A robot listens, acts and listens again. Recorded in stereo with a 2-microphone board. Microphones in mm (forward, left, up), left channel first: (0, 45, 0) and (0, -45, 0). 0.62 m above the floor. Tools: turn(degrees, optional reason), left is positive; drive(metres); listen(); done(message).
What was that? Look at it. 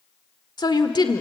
turn(degrees=55, reason="The woman speaking: about 55° left or 125° left.")
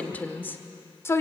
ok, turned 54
turn(degrees=30, reason="So it is at 30° left.")
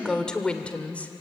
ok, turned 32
turn(degrees=15, reason="The woman speaking is now 15° left.")
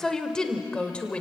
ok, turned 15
turn(degrees=10, reason="The woman speaking is now 10° left.")
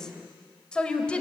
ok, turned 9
turn(degrees=10, reason="The woman speaking is now 10° left.")
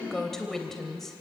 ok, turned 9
done("Found it: a woman speaking, straight ahead, 2 to 4 m away.")